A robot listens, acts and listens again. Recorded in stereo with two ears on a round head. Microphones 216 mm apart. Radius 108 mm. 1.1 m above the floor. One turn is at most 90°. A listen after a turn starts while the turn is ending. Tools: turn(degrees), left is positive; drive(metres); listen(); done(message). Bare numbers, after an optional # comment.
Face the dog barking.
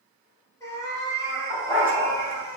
turn(-30)
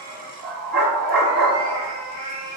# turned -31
# So it is at 140° right.
turn(-90)
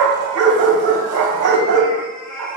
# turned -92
# The dog barking is now 50° right.
turn(-50)
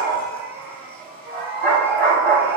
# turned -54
done("Found it: a dog barking, straight ahead, 2 to 4 m away.")